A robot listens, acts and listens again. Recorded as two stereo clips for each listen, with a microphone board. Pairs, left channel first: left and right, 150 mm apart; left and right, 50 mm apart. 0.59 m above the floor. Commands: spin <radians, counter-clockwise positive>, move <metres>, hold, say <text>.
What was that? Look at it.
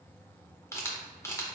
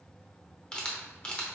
spin 0.35
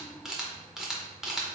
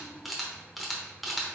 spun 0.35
say Facing the camera shutter.